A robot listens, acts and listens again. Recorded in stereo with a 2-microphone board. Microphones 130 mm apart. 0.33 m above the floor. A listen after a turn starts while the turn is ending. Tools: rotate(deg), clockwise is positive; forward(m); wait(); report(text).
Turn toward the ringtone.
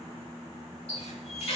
wait()
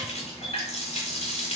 wait()
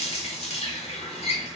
report("I can't make out a ringtone, only a running tap.")